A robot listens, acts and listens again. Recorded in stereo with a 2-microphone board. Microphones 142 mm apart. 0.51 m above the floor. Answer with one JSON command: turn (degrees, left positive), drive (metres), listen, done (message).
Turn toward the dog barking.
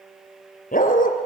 {"turn": 70}
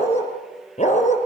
{"turn": 55}
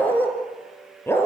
{"turn": 15}
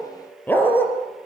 {"turn": 15}
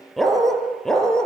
{"done": "Found it: a dog barking, straight ahead."}